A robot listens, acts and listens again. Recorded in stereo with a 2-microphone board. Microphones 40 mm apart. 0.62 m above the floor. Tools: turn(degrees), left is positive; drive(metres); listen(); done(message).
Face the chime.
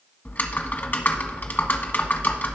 listen()
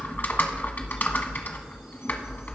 listen()
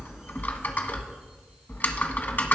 done("I can't make out a chime, only typing on a keyboard.")